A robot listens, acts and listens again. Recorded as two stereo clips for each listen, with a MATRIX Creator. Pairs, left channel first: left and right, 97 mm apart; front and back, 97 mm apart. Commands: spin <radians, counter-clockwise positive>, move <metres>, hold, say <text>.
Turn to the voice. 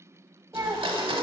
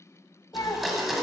spin -0.61
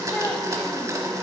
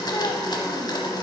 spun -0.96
spin 0.35
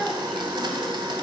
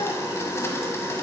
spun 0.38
hold
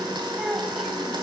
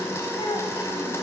say I heard a child speaking from this way, but can't make it out now.